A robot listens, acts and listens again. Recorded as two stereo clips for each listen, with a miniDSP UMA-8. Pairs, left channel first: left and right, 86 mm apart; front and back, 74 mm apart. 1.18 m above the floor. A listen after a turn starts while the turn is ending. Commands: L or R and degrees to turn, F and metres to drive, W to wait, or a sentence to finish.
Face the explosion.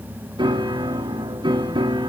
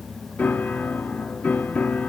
W
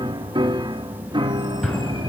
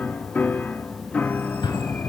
L10
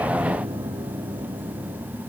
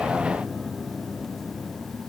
I heard an explosion from this way, but can't make it out now.